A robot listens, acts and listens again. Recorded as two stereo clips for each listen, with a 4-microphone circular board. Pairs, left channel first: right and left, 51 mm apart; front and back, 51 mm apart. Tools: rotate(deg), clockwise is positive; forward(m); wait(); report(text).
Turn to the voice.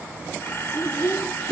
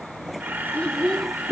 rotate(80)
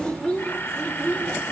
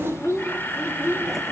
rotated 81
rotate(25)
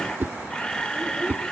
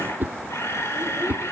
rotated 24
wait()
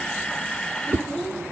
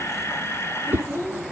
rotate(20)
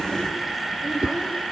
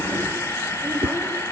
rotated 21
wait()
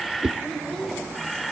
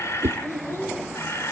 report("Found it: a child speaking, straight ahead.")